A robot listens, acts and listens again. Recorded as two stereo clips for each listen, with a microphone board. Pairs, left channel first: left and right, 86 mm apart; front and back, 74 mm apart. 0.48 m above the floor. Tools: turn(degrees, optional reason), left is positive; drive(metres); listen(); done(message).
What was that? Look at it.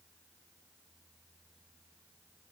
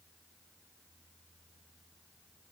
listen()
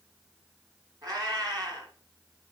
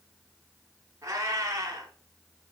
turn(degrees=-130, reason="The cat meowing: 130° right.")
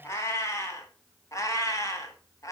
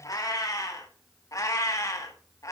turn(degrees=40, reason="The cat meowing is now 40° left.")
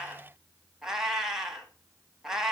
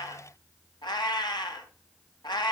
done("Facing the cat meowing, 1 to 2 m away.")